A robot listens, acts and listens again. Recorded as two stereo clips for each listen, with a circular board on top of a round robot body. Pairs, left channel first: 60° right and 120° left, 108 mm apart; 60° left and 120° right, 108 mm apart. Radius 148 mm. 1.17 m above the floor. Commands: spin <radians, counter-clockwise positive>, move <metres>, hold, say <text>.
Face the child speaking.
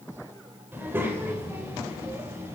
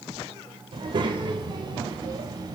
spin -3.05
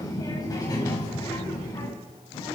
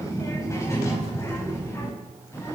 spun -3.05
say Found it: a child speaking, straight ahead, over 4 m away.